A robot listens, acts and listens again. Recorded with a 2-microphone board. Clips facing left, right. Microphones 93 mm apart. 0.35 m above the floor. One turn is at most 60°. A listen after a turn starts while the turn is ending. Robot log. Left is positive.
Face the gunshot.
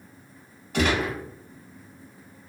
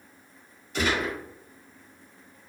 note: The gunshot: about 65° left or 115° left.
cmd yaw +60
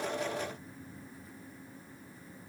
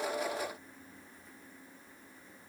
cmd idle
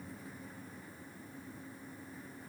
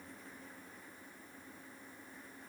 end: I heard a gunshot, but can't make it out now. It was about 5° left or 55° left.